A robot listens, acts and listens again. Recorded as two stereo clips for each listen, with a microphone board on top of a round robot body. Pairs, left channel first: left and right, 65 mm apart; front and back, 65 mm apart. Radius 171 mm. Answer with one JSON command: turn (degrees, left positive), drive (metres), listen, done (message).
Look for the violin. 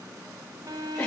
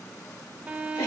{"turn": -110}
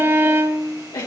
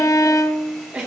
{"turn": -35}
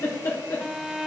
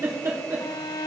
{"done": "Facing the violin, under 1 m away."}